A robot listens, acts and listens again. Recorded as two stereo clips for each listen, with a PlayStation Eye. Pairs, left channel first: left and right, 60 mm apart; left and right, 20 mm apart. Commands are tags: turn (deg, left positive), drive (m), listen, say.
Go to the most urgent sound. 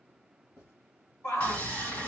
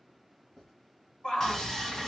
<turn deg="60"/>
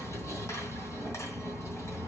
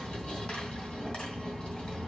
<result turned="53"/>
<listen/>
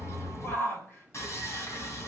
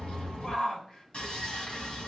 <turn deg="55"/>
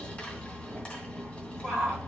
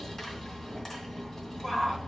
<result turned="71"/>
<turn deg="-15"/>
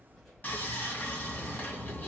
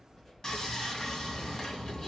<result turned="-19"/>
<listen/>
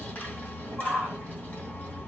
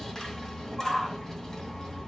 <drive m="1.0"/>
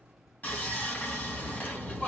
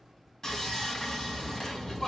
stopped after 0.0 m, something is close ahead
<say>Blocked. The shout is further on, straight ahead.</say>